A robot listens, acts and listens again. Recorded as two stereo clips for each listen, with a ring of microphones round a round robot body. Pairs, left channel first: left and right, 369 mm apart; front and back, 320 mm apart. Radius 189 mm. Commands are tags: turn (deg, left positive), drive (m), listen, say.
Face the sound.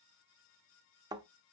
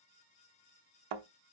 <turn deg="-170"/>
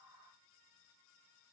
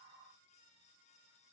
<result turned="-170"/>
<say>I heard a thud from this way, but can't make it out now.</say>